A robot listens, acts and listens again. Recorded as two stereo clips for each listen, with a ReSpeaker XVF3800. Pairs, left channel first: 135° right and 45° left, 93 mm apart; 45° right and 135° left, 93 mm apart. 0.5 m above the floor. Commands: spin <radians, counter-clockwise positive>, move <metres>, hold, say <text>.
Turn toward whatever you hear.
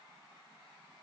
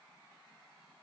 hold
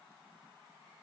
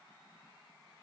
hold
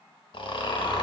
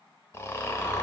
spin -1.83
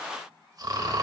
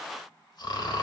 say Facing the snoring, under 1 m away.